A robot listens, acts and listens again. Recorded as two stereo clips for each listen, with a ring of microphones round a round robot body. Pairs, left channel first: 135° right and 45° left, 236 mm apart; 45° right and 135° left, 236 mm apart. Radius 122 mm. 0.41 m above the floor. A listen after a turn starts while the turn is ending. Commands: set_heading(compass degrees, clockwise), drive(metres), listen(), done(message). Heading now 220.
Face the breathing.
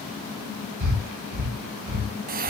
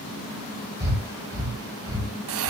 set_heading(165)
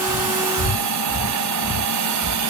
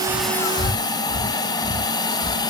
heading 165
set_heading(180)
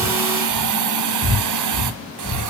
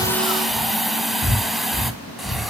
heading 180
done("Found it: breathing, straight ahead, over 4 m away.")